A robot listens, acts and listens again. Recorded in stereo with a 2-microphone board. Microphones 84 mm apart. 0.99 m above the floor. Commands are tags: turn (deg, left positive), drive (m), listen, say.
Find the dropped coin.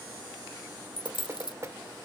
<turn deg="70"/>
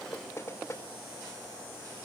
<listen/>
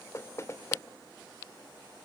<say>I heard a dropped coin, but can't make it out now. It was about straight ahead or 40° left.</say>